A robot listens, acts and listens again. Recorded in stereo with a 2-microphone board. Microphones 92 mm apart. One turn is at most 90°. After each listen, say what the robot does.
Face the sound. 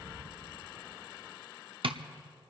Turn 70° right.
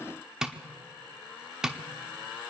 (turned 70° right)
Found it: tapping, straight ahead.